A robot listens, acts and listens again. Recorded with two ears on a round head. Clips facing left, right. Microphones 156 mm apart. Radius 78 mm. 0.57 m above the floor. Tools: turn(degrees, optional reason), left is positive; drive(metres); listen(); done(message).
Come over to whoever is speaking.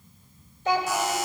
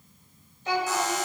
turn(degrees=50, reason="The child speaking: about 50° left or 130° left.")
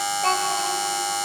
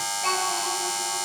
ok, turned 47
turn(degrees=80, reason="So it is at 80° left.")
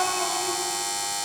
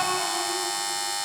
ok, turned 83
listen()
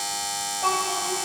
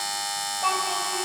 drive(metres=1.0)
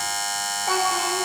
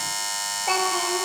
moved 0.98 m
turn(degrees=-10, reason="The child speaking is now 10° right.")
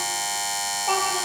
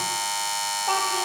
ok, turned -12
listen()
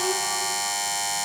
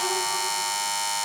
listen()
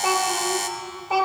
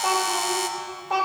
drive(metres=1.0)
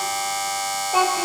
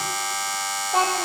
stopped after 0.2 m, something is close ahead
done("I am next to the child speaking.")